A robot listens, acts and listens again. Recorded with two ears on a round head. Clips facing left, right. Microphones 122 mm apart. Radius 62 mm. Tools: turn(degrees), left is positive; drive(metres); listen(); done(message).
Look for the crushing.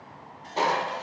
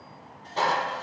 turn(degrees=20)
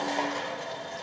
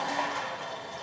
turn(degrees=135)
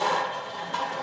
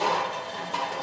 turn(degrees=-10)
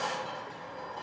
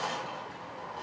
done("Facing the crushing.")